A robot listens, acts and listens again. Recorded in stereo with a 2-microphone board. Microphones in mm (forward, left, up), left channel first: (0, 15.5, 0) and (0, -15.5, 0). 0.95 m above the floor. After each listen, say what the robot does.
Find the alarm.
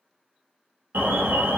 Turn 90° right.
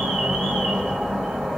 Turn 10° right.
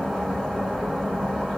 Found it: an alarm, straight ahead.